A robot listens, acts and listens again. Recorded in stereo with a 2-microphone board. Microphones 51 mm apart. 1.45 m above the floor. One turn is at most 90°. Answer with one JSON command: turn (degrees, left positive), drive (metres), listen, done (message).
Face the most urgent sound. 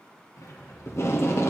{"listen": true}
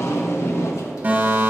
{"turn": -30}
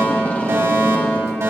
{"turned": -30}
{"turn": -90}
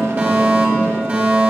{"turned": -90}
{"turn": -35}
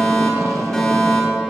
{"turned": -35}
{"done": "Found it: a fire alarm, straight ahead."}